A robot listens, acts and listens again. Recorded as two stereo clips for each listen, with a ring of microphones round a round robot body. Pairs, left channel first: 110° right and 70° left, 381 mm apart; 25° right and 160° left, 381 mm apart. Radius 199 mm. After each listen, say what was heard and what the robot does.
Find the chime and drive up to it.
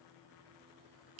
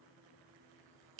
Keep listening.
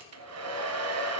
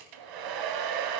Keep listening.
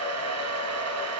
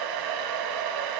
I can't make out a chime to turn to.